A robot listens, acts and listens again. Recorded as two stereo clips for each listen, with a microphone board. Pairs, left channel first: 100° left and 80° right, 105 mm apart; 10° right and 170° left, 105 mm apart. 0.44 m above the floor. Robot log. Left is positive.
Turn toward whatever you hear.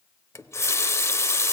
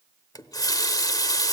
note: The running tap: 40° left.
cmd yaw +40
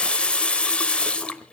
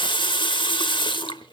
note: The running tap is now 20° left.
cmd yaw +20
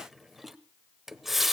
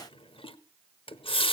note: The running tap is now 10° left.
cmd yaw +10
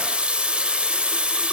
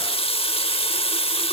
end: Found it: a running tap, straight ahead, under 1 m away.